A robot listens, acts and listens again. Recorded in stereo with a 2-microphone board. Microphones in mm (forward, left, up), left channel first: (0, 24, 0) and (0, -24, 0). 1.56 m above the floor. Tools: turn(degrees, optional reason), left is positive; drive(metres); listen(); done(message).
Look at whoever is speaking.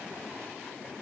listen()
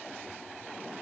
listen()
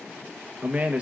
turn(degrees=-30, reason="The man speaking: about 30° right or 150° right.")
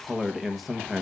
done("Facing the man speaking.")